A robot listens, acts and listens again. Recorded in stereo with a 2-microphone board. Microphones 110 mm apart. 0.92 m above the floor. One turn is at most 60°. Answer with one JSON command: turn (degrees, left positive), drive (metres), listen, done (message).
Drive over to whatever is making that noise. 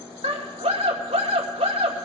{"turn": -60}
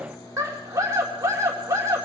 {"turn": -30}
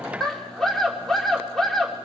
{"drive": 1.0}
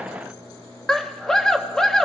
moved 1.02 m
{"drive": 1.0}
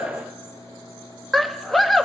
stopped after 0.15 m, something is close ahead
{"done": "I am next to the scream."}